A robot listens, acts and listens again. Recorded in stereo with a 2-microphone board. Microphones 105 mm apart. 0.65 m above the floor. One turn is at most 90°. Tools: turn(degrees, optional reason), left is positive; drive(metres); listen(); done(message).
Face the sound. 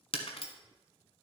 turn(degrees=65, reason="The breaking glass: about 65° left or 115° left.")
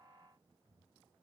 listen()
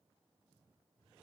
done("I heard breaking glass, but can't make it out now. It was about straight ahead or 50° left.")